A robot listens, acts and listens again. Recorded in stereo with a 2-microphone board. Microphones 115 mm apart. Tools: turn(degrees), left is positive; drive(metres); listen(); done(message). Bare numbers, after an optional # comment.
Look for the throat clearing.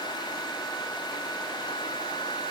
listen()
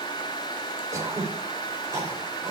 # The throat clearing: about 30° right or 150° right.
turn(-30)
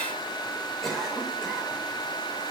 done("Facing the throat clearing.")